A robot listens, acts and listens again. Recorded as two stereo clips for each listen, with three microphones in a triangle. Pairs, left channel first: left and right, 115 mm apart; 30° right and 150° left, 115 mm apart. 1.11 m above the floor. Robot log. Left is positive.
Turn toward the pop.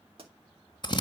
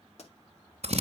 note: The pop: 50° right.
cmd yaw -50
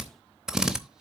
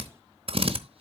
end: Facing where the pop came from. I can't hear it now.